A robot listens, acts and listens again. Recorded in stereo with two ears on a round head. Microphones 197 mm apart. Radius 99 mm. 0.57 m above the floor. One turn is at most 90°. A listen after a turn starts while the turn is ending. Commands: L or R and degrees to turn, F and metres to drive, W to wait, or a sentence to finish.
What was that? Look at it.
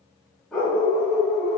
L30
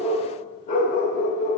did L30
L90
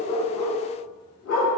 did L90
L70
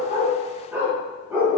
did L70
R10
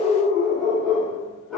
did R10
Found it: a dog barking, straight ahead.